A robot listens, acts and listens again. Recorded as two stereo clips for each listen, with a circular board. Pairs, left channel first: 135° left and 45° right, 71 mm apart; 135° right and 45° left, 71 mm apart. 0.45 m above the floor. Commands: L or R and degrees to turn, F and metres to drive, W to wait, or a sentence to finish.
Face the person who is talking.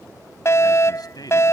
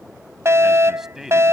L130
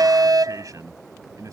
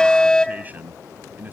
R20
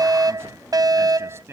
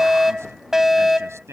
Facing the man speaking.